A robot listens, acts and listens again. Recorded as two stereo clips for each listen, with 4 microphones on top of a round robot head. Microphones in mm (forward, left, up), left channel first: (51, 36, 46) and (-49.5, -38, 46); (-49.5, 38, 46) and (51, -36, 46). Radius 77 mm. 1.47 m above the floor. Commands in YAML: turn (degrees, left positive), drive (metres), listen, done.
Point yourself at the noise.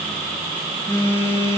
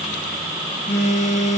turn: 105
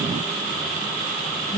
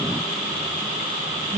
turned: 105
done: "Facing the phone buzzing, under 1 m away."